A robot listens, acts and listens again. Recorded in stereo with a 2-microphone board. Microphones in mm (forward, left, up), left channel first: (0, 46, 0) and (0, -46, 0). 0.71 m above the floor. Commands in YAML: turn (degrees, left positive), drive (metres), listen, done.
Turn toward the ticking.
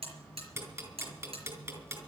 turn: -25
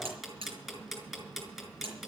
done: "Found it: ticking, straight ahead, over 4 m away."